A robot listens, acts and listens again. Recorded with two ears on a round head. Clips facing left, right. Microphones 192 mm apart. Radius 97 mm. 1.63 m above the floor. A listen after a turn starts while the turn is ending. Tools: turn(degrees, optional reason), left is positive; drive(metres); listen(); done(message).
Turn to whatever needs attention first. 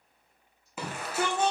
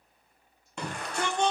turn(degrees=30)
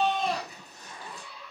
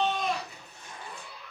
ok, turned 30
turn(degrees=145, reason="So it is at 145° left.")
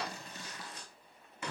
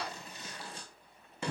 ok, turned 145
turn(degrees=-25, reason="The shout is now 25° right.")
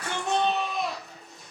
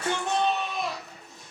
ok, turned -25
done("Found it: a shout, straight ahead.")